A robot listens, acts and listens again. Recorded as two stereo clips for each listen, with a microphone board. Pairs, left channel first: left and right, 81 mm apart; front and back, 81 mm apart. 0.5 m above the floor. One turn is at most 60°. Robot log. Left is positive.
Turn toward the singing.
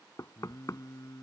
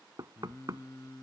note: The singing: 45° left.
cmd yaw +45
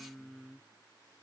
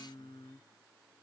end: Found it: singing, straight ahead.